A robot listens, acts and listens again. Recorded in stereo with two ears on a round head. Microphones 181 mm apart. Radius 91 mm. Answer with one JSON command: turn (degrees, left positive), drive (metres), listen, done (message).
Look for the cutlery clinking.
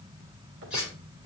{"turn": -30}
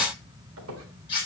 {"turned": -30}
{"turn": 25}
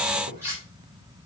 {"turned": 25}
{"turn": -15}
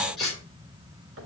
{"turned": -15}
{"done": "Found it: cutlery clinking, straight ahead."}